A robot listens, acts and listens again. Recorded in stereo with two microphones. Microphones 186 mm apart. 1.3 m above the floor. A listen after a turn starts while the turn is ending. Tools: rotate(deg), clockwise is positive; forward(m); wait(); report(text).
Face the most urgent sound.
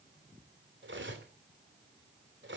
wait()
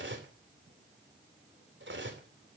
wait()
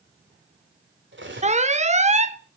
rotate(35)
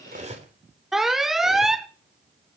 report("Found it: an alarm, straight ahead.")